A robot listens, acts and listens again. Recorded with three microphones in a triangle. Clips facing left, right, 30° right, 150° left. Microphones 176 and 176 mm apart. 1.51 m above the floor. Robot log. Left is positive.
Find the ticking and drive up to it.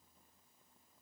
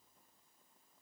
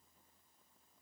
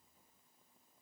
cmd idle
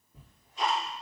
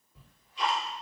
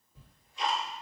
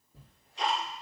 note: The ticking: 135° left.
cmd yaw +135
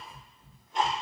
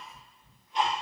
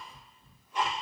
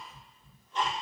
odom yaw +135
note: The ticking is now 45° left.
cmd yaw +45
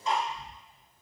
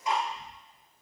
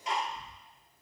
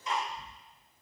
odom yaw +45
note: The ticking is now 15° right.
cmd yaw -15
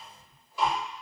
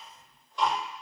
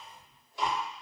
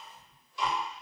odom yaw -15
cmd fwd 1.0
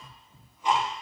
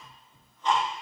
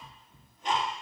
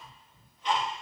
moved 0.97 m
note: The ticking is now 10° left.
cmd yaw +10
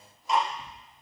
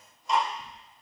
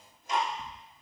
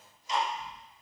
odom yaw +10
cmd fwd 1.0
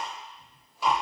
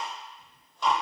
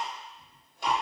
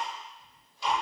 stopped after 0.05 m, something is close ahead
end: Arrived at the ticking, straight ahead.